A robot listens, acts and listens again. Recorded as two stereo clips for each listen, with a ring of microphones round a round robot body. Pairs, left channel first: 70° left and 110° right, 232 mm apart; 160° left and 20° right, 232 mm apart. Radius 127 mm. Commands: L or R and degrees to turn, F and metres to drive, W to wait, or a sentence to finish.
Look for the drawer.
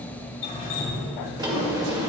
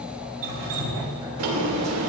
R40
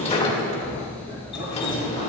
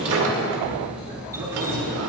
Facing the drawer, 2 to 4 m away.